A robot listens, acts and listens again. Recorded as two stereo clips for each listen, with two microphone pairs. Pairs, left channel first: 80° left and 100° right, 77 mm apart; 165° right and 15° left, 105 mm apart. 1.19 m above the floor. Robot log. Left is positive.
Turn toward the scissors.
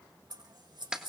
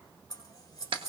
note: The scissors: 115° right.
cmd yaw -115
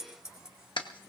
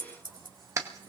note: The scissors is now 20° right.
cmd yaw -20
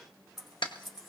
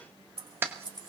note: The scissors is now 10° right.
cmd yaw -10
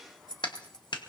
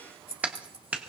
end: Facing the scissors, over 4 m away.